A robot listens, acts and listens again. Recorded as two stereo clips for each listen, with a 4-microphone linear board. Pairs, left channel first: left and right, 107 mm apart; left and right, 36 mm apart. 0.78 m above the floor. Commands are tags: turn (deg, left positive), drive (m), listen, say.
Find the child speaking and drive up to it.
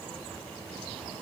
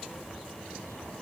<listen/>
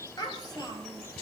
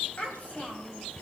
<turn deg="40"/>
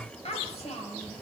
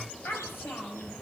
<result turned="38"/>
<turn deg="100"/>
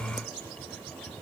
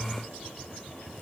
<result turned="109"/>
<turn deg="-10"/>
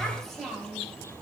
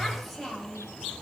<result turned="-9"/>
<drive m="1.0"/>
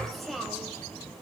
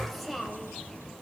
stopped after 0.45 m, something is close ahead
<say>Blocked. The child speaking is further on, straight ahead.</say>